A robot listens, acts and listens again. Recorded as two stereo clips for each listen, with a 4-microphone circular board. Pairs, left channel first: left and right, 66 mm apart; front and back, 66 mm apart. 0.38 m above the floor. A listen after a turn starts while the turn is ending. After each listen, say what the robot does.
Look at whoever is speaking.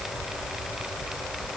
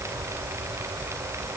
Keep listening.
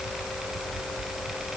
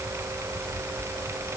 Keep listening.
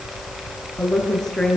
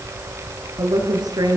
Turn 175° left.
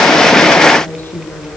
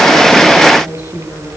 Turn 30° left.
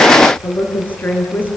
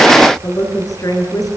Turn 25° left.
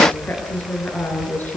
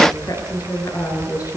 Turn 25° left.
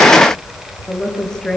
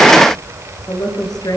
Turn 10° left.
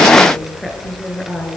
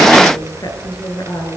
Facing the woman speaking.